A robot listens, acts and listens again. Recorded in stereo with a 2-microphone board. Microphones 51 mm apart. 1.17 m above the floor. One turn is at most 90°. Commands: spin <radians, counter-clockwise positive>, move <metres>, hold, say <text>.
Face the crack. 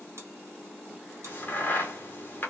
spin 0.70
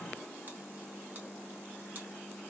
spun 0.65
hold
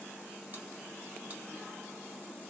say I heard a crack, but can't make it out now. It was about straight ahead or 105° left.